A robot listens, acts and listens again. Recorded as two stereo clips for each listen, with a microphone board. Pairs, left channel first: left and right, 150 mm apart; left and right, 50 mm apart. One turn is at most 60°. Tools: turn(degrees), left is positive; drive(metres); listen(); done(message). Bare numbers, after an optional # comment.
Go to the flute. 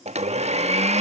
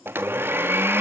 listen()
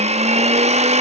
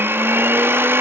listen()
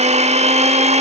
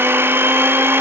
done("I can't make out a flute to turn to.")